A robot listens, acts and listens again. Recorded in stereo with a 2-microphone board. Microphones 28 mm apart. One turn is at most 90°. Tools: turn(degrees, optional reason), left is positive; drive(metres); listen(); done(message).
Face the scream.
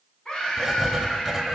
turn(degrees=35, reason="The scream: about 35° left or 145° left.")
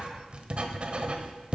listen()
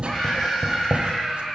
done("Found it: a scream, straight ahead, 2 to 4 m away.")